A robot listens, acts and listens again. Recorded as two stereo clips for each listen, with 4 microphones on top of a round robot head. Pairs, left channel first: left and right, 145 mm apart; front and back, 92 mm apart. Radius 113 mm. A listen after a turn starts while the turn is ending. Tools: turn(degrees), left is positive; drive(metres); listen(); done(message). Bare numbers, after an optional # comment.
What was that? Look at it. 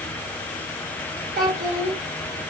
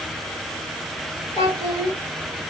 # The child speaking: 50° right.
turn(-50)
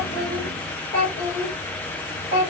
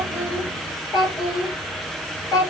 # The child speaking is now 45° left.
turn(45)
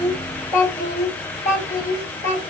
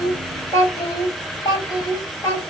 # The child speaking is now 25° left.
turn(25)
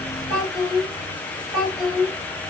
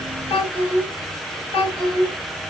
done("Found it: a child speaking, straight ahead, 2 to 4 m away.")